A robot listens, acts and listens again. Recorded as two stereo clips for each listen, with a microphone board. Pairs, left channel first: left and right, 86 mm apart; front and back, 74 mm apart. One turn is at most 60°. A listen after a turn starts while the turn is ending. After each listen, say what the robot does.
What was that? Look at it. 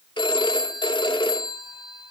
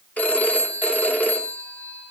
Turn 60° left.
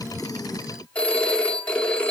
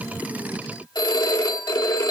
Turn 15° left.
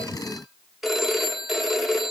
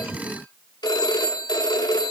Facing the phone ringing, 2 to 4 m away.